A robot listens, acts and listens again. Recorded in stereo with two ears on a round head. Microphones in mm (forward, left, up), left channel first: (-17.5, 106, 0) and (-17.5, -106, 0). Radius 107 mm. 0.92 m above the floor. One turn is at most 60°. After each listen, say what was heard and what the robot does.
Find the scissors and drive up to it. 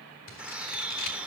The scissors: about 55° left or 125° left. Turn 55° left.
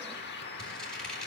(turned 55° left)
Drive 1.0 m forward.
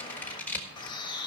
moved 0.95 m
The scissors is now 10° left. Turn 10° left.
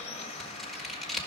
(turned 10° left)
Drive 1.0 m forward.
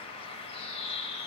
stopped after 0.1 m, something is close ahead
Keep listening.
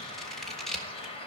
Arrived at the scissors, straight ahead.